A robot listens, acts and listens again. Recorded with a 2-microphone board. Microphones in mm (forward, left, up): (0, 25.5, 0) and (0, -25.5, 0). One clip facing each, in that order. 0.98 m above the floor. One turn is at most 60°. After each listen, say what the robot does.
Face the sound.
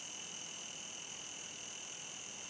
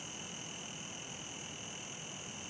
Keep listening.
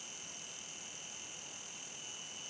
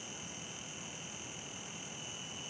Keep listening.
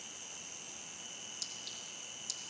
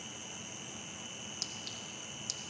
Turn 55° right.
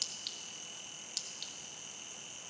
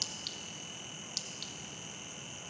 Found it: a clink, straight ahead, under 1 m away.